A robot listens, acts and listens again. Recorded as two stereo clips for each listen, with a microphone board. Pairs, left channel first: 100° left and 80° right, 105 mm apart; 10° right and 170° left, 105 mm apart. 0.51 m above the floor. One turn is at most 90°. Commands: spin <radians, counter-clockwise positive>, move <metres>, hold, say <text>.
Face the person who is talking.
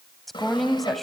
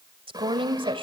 spin -1.57
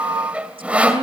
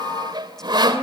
spin -1.40
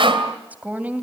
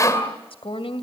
say Found it: a woman speaking, straight ahead.